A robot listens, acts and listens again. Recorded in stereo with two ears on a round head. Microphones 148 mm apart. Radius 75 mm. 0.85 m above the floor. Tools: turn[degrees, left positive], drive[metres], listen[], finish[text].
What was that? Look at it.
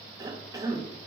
Thought: The cough: about 20° right or 160° right.
Action: turn[-20]
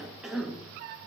Action: finish[Found it: a cough, straight ahead.]